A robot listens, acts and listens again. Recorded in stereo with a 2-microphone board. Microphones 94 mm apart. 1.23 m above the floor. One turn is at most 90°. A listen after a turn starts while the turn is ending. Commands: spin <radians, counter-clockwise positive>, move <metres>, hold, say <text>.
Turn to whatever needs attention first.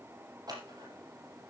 hold
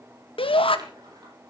spin 1.22
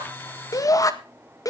spin 0.70
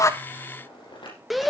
say Facing the shout, 1 to 2 m away.